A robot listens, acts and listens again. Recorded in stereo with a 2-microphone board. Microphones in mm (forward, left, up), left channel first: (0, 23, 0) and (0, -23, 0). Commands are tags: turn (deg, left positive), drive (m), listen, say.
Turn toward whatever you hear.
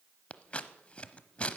<turn deg="30"/>
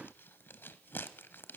<turn deg="120"/>
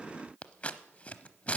<turn deg="30"/>
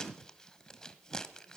<turn deg="15"/>
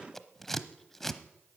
<say>Facing the scissors.</say>